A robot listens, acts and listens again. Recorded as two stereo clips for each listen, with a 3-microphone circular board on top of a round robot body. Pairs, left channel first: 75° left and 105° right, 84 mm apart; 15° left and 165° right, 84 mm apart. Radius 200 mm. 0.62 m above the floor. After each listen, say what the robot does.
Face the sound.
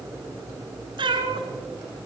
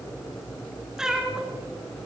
Turn 80° right.
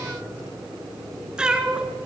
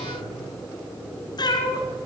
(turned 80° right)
Turn 25° right.
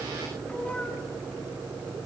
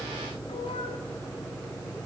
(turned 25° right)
Keep listening.
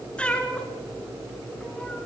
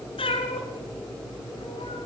Facing the cat meowing, 2 to 4 m away.